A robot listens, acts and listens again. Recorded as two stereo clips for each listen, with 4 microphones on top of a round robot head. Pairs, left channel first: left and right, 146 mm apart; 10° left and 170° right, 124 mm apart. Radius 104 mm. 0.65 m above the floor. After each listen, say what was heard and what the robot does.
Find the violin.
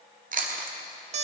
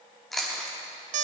Keep listening.
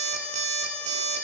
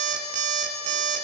Keep listening.
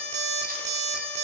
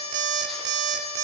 I can't make out a violin to turn to.